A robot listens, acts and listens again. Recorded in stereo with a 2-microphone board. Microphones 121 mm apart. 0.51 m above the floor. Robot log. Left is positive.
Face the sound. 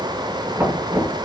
note: The knocking: about 20° right or 160° right.
cmd yaw -20
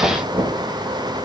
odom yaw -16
note: So it is at 145° right.
cmd yaw -145
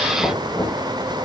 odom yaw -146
end: Found it: knocking, straight ahead, over 4 m away.